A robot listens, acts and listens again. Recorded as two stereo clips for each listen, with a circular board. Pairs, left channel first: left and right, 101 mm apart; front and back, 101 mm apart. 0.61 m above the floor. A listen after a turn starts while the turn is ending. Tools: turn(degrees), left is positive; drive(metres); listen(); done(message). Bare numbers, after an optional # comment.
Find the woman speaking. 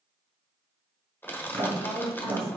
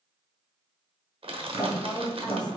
# The woman speaking: 85° left.
turn(85)
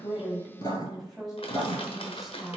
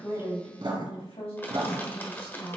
done("Found it: a woman speaking, straight ahead.")